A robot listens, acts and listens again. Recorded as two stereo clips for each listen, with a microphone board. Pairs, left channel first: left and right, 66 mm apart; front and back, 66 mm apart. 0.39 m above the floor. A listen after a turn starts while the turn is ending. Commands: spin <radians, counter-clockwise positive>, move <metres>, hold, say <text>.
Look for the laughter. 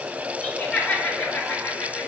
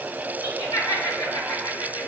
spin 0.26
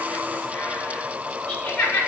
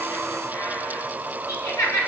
spin 0.35
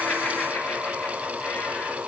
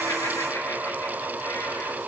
hold
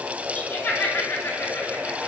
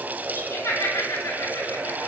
spin 0.52
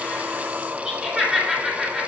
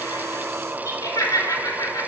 spin -0.26
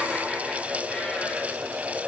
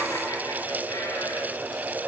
hold
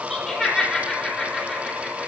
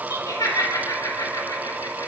say Found it: laughter, straight ahead, 2 to 4 m away.